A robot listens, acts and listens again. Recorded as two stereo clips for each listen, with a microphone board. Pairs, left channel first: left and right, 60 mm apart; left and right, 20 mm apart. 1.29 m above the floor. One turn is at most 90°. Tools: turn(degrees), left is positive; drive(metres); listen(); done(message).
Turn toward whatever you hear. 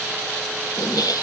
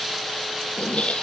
turn(degrees=90)
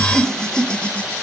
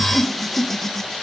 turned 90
turn(degrees=20)
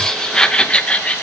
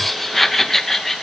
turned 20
turn(degrees=25)
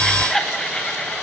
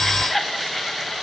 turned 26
turn(degrees=10)
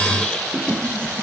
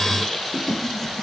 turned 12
turn(degrees=20)
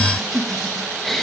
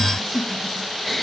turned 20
done("Facing the laughter, 1 to 2 m away.")